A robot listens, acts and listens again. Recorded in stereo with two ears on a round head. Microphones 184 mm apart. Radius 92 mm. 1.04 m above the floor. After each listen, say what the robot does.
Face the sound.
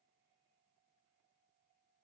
Keep listening.
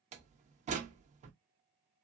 Turn 35° right.
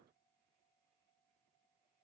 Keep listening.
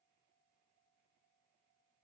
I heard a door slam, but can't make it out now. It was about straight ahead or 110° right.